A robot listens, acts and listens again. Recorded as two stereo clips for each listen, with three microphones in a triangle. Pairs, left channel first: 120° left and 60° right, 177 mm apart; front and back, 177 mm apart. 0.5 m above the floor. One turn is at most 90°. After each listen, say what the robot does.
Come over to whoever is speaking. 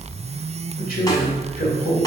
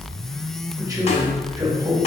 Turn 90° left.
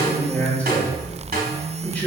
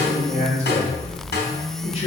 Turn 40° left.
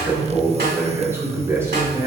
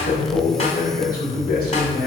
Turn 15° left.
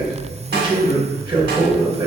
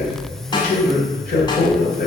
Drive 1.0 m forward.
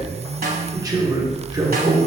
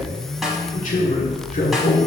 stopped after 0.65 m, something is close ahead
I am next to the man speaking.